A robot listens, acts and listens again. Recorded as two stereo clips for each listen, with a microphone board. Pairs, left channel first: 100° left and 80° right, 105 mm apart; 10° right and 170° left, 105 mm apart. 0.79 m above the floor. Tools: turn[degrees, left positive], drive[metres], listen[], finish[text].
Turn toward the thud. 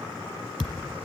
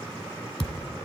Action: finish[Facing the thud.]